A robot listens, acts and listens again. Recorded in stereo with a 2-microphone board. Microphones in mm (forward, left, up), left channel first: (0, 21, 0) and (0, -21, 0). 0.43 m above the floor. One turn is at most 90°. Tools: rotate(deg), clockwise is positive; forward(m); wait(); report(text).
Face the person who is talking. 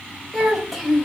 rotate(-30)
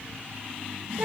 wait()
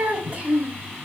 rotate(30)
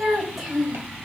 report("Found it: a child speaking, straight ahead.")